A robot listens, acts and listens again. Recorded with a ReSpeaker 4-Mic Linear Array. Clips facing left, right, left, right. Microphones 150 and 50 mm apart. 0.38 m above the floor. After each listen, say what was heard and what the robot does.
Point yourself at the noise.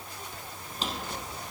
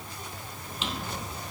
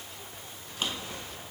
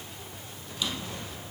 The drawer: about 40° left or 140° left. Turn 40° left.
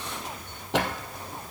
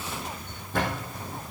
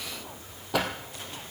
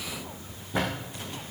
So it is at 105° left. Turn 105° left.
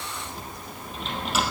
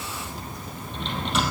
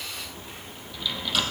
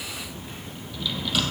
Found it: a drawer, straight ahead, 2 to 4 m away.